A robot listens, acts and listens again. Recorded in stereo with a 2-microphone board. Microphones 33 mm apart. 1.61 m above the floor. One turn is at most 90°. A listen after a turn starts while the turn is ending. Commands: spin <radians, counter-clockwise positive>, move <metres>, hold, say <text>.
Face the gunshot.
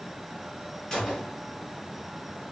spin 0.26
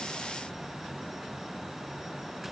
hold
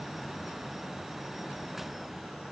say I heard a gunshot, but can't make it out now. It was about straight ahead or 150° left.